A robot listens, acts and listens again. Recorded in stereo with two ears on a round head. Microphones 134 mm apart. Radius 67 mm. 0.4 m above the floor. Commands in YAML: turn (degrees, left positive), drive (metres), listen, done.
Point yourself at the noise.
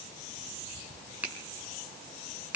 turn: -30
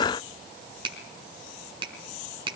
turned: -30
turn: -140
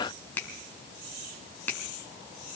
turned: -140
turn: 15
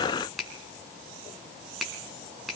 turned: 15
done: "Found it: a finger snap, straight ahead."